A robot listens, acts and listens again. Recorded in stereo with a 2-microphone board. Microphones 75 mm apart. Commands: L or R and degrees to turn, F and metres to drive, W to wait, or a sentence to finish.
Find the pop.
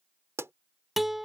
R40
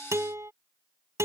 W
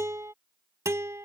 I heard a pop, but can't make it out now. It was about straight ahead or 100° right.